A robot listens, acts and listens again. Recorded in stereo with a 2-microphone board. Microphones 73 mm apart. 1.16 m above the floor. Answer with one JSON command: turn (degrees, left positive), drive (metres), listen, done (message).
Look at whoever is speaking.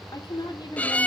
{"turn": 70}
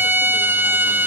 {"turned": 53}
{"listen": true}
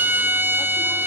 {"listen": true}
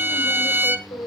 {"turn": 80}
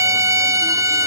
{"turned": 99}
{"turn": -20}
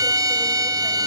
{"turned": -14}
{"listen": true}
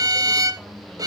{"done": "I heard a woman speaking from this way, but can't make it out now."}